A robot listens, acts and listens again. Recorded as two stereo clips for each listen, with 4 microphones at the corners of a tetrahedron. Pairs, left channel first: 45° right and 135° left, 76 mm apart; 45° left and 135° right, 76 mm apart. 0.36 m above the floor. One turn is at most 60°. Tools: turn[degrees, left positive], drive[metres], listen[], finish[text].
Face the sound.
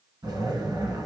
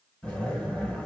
Thought: The zipper: 125° left.
Action: turn[60]
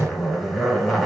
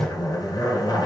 Thought: The zipper is now 45° left.
Action: turn[45]
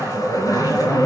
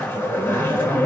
Thought: The zipper is now 15° right.
Action: turn[-15]
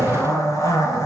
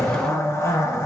Action: finish[Facing the zipper.]